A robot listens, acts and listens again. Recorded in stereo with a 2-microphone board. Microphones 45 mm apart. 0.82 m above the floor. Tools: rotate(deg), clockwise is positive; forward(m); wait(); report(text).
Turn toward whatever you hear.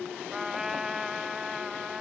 rotate(30)
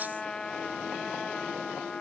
rotate(-15)
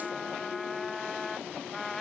report("Found it: a trumpet, straight ahead.")